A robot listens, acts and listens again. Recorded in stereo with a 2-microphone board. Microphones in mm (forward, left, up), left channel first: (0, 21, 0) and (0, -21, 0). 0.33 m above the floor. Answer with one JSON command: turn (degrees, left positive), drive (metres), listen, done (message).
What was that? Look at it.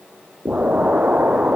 {"turn": -35}
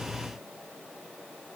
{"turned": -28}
{"listen": true}
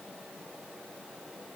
{"done": "I heard an explosion, but can't make it out now. It was about 5° right or 120° right."}